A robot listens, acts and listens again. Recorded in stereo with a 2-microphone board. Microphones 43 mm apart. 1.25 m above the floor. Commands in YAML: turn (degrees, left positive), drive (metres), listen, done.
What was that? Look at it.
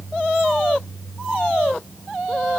listen: true
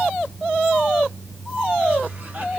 listen: true
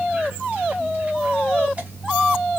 done: "I can't make out anything to turn to."